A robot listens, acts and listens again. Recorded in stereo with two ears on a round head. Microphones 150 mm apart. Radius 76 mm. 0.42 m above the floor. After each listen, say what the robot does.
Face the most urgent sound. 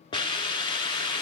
Keep listening.
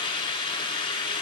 Keep listening.
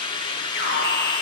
Turn 55° left.
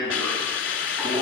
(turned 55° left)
Facing the alarm, 2 to 4 m away.